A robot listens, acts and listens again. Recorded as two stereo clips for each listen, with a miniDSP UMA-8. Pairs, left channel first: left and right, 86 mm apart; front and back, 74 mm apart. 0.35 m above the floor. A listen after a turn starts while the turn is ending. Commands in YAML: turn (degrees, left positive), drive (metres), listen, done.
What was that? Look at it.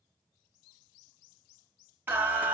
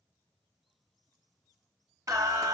turn: -160
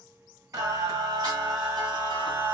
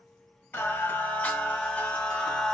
turn: -80
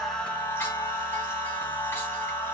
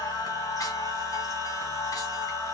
turn: 30
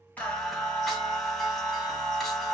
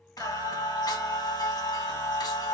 done: "Facing the singing, 1 to 2 m away."